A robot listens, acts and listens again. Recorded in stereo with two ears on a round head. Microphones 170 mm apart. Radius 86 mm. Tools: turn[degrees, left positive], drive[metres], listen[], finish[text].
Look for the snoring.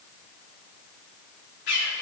Action: listen[]
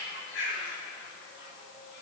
Action: listen[]
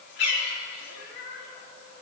Action: finish[I can't make out snoring to turn to.]